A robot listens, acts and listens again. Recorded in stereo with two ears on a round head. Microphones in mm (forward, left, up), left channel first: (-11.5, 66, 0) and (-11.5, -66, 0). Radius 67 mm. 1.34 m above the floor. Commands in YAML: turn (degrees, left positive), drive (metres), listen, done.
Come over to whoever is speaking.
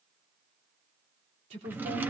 turn: -55
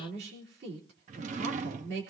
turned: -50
turn: -75
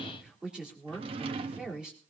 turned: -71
drive: 1.0
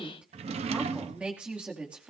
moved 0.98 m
drive: 1.0
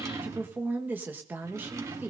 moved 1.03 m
turn: -10
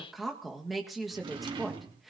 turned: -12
drive: 1.0
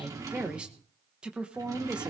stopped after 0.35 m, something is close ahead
done: "Arrived at the woman speaking, straight ahead."